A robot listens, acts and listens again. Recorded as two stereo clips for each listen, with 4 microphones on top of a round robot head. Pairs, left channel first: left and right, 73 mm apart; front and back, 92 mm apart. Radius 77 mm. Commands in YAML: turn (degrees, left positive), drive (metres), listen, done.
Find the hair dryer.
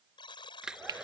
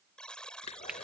turn: -10
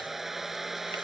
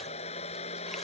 done: "Facing the hair dryer."